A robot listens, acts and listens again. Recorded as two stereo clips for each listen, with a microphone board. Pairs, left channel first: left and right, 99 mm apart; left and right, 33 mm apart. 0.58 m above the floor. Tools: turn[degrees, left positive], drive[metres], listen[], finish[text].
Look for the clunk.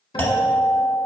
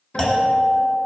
Thought: The clunk: about 20° left or 160° left.
Action: turn[20]
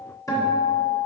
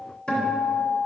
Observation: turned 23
Action: listen[]
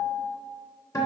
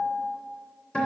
Action: finish[I heard a clunk, but can't make it out now. It was about 5° right or 140° left.]